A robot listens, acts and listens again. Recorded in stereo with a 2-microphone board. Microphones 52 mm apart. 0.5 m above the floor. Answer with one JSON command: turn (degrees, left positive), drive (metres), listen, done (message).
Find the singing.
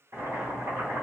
{"listen": true}
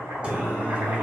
{"turn": -25}
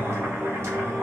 {"turn": -115}
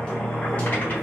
{"turn": 30}
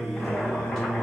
{"turn": 10}
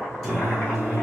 {"done": "Facing the singing."}